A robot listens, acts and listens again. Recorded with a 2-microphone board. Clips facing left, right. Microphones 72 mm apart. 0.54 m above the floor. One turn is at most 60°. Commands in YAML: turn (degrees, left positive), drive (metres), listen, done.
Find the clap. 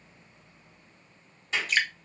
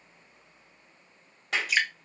turn: -60
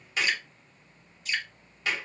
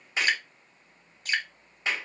turn: -25
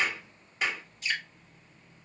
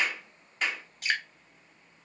done: "Facing the clap, 2 to 4 m away."